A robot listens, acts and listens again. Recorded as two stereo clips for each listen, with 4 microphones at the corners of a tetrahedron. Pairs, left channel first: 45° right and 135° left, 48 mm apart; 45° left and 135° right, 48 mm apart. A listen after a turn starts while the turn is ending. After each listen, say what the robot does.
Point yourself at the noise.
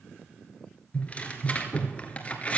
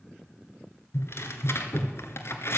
Turn 15° left.
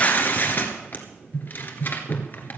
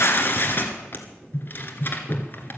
Found it: tearing paper, straight ahead.